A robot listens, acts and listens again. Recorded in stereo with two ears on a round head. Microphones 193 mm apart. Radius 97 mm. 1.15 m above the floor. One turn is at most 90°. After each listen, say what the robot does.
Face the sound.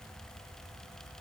Keep listening.
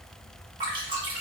Turn 25° right.
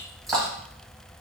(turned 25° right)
Facing the dripping, 1 to 2 m away.